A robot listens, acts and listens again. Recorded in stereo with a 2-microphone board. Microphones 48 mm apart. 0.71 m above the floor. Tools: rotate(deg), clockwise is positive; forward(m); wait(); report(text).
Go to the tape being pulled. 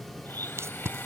rotate(75)
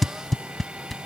forward(1.0)
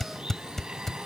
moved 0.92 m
rotate(-10)
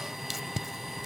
forward(1.0)
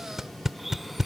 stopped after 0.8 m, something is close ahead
rotate(10)
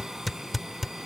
report("I am next to the tape being pulled.")